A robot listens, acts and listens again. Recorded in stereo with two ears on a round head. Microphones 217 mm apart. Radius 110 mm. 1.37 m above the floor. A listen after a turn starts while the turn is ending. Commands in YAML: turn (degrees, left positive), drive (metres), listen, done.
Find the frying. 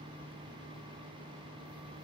listen: true
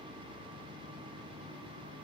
listen: true
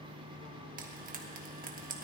turn: -35
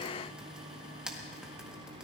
done: "Facing the frying."